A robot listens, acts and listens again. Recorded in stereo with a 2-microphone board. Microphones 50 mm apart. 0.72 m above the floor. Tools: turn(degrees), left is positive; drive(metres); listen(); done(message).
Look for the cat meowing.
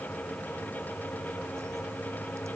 listen()
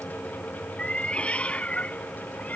turn(degrees=30)
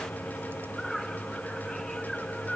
done("Found it: a cat meowing, straight ahead.")